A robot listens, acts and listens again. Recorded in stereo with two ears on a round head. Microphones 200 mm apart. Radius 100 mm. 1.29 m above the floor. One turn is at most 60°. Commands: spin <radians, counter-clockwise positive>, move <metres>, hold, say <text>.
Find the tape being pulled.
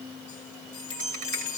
hold
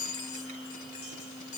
hold
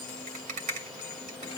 say I can't make out tape being pulled to turn to.